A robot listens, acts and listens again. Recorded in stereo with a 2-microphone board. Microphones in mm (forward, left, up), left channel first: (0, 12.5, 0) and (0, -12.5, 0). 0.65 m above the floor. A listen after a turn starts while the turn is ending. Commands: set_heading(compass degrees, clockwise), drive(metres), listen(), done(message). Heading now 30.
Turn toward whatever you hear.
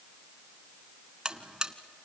set_heading(60)
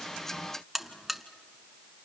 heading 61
done("Found it: a buzzer, straight ahead.")